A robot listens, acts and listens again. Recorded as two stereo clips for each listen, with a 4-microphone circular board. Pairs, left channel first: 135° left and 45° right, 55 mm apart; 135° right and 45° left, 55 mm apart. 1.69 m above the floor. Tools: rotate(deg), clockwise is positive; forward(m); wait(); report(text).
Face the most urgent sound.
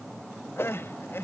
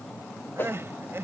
rotate(-90)
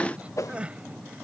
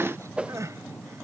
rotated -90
rotate(-25)
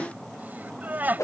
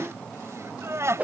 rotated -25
rotate(-15)
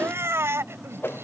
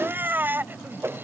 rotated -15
report("Found it: crying, straight ahead.")